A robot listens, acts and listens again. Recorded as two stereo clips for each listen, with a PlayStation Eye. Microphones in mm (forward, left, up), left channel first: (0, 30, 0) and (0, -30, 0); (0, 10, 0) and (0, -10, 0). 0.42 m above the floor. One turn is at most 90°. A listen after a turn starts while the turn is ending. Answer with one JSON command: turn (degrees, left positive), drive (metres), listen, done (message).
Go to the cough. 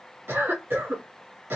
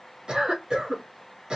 {"turn": -45}
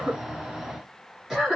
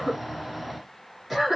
{"turn": -10}
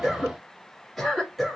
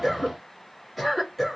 {"drive": 1.0}
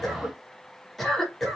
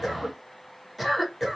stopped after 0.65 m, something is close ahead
{"done": "Arrived at the cough, straight ahead."}